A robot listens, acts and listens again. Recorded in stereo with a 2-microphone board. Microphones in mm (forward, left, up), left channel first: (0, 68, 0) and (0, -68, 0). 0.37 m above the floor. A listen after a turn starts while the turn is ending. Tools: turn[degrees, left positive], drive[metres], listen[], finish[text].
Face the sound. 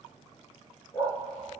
Thought: The dog barking: about 35° left or 145° left.
Action: turn[35]
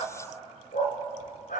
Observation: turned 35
Thought: So it is at 100° left.
Action: turn[100]
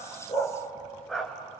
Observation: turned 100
Action: finish[Facing the dog barking, 2 to 4 m away.]